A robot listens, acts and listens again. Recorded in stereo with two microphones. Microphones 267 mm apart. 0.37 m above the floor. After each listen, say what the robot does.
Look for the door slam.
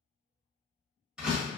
Turn 30° right.
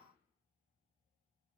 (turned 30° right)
Keep listening.
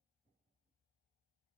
I heard a door slam, but can't make it out now. It was about 25° left or 145° right.